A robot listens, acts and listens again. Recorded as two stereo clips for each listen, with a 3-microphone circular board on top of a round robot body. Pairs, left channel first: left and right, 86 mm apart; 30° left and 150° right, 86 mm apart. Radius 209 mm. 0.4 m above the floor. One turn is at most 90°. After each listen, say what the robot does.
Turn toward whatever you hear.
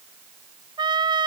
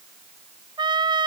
Turn 90° right.
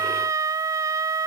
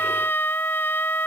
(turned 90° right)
Turn 35° right.
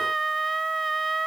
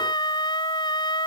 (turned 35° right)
Found it: a trumpet, straight ahead.